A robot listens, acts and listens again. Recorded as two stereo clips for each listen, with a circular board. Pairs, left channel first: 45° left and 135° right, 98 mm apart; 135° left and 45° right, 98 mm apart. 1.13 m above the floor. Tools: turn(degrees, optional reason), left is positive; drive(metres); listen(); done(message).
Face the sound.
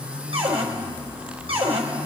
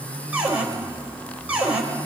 turn(degrees=-120, reason="The cupboard door: 120° right.")
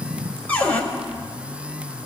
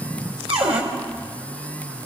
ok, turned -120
turn(degrees=-30, reason="The cupboard door is now 30° right.")
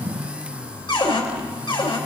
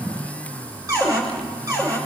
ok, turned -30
turn(degrees=10, reason="The cupboard door is now 10° left.")
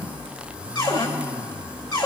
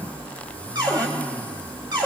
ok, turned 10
done("Facing the cupboard door.")